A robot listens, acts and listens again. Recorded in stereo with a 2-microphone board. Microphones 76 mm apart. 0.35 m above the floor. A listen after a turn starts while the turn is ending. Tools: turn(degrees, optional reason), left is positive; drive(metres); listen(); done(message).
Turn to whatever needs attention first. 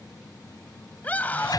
turn(degrees=20, reason="The scream: about 20° left or 160° left.")
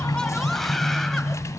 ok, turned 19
listen()
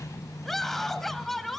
done("Found it: a scream, straight ahead.")